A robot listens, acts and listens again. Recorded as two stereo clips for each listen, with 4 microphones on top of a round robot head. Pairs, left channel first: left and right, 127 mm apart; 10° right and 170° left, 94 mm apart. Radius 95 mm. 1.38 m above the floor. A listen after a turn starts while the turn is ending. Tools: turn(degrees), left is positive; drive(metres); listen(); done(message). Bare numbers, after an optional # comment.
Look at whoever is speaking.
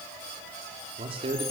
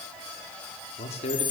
# The man speaking: 35° right.
turn(-35)
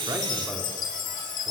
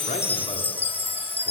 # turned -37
listen()
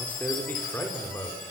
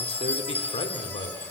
# The man speaking is now 15° left.
turn(15)
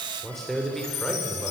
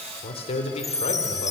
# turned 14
done("Found it: a man speaking, straight ahead, over 4 m away.")